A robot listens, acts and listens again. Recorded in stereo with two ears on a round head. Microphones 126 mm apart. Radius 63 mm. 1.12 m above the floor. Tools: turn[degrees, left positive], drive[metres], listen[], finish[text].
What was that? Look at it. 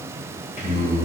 Thought: The singing: about 45° left or 135° left.
Action: turn[45]
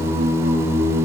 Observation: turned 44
Thought: So it is at 10° right.
Action: turn[-10]
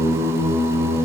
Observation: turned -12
Thought: The singing is now 15° right.
Action: turn[-15]
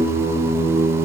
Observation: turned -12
Thought: The singing is now 15° right.
Action: turn[-15]
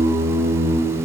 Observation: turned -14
Thought: The singing is now 10° right.
Action: turn[-10]
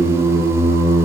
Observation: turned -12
Thought: The singing is now 10° right.
Action: turn[-10]
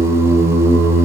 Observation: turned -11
Action: finish[Found it: singing, straight ahead.]